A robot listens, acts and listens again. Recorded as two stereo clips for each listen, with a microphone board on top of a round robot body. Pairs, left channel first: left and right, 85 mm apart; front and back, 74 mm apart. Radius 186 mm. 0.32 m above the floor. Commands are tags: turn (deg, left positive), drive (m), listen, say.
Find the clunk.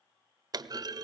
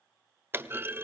<turn deg="-125"/>
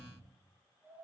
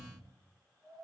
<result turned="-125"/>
<say>Facing where the clunk came from. I can't hear it now.</say>